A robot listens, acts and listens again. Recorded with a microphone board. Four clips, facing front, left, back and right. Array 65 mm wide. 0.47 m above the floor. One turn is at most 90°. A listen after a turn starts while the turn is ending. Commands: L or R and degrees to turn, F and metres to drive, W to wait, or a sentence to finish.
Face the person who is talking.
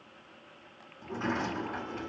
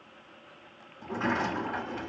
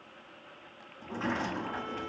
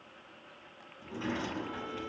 W
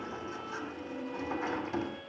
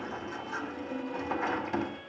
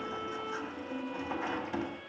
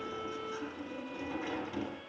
W
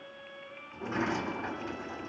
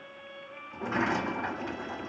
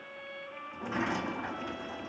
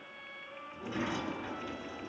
I can't make out anyone speaking to turn to.